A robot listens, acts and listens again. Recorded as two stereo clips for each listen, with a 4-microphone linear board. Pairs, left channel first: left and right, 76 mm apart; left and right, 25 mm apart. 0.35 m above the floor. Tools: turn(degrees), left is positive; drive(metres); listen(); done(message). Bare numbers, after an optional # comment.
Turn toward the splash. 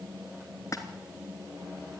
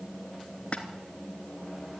# The splash: about 45° left or 135° left.
turn(45)
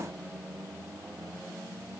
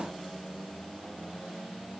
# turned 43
listen()
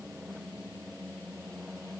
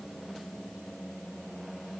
done("I heard a splash, but can't make it out now. It was about straight ahead or 95° left.")